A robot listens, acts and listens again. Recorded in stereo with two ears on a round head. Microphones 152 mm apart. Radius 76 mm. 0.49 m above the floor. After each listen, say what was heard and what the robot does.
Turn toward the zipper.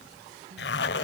The zipper: about 70° left or 110° left. Turn 70° left.
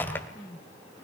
So it is at 15° left. Turn 15° left.
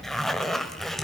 Facing the zipper.